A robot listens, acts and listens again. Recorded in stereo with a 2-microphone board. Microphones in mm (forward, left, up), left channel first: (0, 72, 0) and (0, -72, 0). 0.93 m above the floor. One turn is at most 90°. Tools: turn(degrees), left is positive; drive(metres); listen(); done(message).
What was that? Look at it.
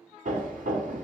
turn(degrees=-65)
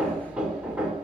turn(degrees=-10)
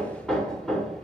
done("Found it: hammering, straight ahead.")